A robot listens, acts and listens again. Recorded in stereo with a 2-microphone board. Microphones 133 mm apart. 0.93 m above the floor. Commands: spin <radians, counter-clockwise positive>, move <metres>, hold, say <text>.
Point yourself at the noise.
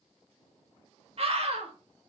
spin -0.87
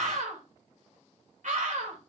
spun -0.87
spin -1.31
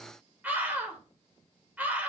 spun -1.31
spin -0.17
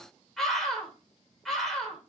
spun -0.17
say Found it: a scream, straight ahead.